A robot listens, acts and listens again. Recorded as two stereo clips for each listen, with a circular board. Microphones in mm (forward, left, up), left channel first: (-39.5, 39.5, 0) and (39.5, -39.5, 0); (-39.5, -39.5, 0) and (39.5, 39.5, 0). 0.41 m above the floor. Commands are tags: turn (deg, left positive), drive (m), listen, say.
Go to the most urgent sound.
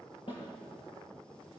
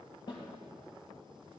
<listen/>
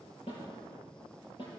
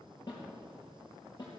<listen/>
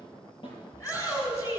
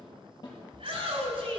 <turn deg="75"/>
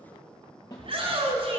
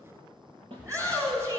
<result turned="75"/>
<turn deg="-15"/>
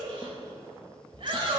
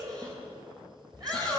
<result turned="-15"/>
<drive m="1.0"/>
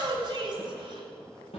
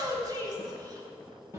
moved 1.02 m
<drive m="1.0"/>
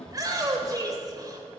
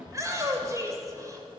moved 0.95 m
<drive m="1.0"/>
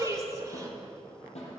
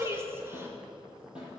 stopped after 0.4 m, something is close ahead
<turn deg="-10"/>
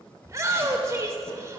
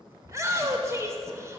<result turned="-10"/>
<say>Arrived at the shout, straight ahead.</say>